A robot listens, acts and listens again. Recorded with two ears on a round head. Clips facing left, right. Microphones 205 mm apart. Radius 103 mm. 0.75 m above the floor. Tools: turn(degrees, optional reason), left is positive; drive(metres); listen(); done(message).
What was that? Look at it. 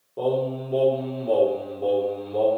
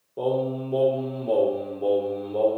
turn(degrees=30)
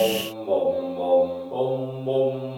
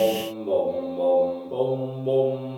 turn(degrees=-35, reason="So it is at 35° right.")
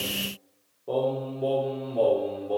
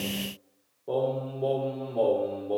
done("Facing the singing.")